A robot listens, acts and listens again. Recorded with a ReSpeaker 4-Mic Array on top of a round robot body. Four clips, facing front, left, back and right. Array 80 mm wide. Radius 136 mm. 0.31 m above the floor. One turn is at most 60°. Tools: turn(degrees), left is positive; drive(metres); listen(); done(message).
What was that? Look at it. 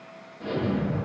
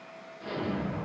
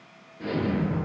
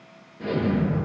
turn(degrees=-60)
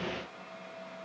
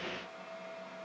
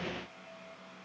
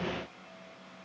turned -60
turn(degrees=-60)
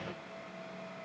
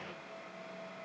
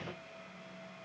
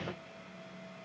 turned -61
done("Facing where the explosion came from. I can't hear it now.")